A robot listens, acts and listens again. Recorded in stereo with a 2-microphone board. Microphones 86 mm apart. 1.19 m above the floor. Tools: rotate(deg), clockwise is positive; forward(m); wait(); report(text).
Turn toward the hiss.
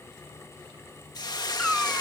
rotate(-50)
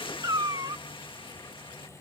rotate(-80)
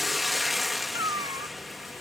report("Facing the hiss.")